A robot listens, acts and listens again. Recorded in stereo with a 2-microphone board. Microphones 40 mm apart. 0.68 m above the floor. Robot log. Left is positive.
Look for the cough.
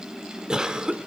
note: The cough: about 20° right or 160° right.
cmd yaw -20
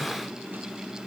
cmd idle
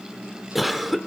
end: Facing the cough, 1 to 2 m away.